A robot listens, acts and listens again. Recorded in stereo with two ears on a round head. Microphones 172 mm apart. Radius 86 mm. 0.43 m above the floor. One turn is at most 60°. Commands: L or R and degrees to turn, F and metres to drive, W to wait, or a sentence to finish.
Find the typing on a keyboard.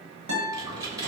R20
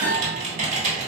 R60
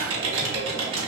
R60
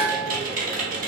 R50
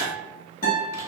W
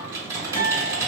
R15
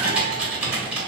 Facing the typing on a keyboard, under 1 m away.